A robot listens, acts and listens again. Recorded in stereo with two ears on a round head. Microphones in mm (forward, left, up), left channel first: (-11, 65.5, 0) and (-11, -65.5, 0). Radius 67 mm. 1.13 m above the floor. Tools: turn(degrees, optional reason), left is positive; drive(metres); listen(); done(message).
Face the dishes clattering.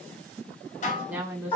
turn(degrees=50, reason="The dishes clattering: about 50° left or 130° left.")
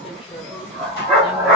listen()
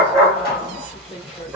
listen()
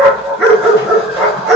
done("I heard dishes clattering, but can't make it out now. It was about straight ahead or 80° left.")